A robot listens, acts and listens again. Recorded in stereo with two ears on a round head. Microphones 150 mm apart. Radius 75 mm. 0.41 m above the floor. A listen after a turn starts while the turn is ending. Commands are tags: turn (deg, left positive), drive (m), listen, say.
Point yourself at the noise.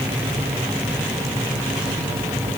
<listen/>
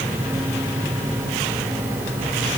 <listen/>
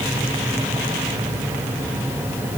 <say>I can't make out anything to turn to.</say>